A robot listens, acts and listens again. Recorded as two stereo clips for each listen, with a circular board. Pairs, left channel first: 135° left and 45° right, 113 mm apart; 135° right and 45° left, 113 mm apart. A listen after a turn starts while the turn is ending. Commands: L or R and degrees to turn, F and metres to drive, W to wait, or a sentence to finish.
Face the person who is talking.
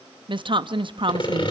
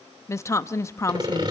R75
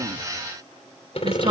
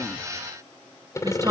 Found it: a woman speaking, straight ahead.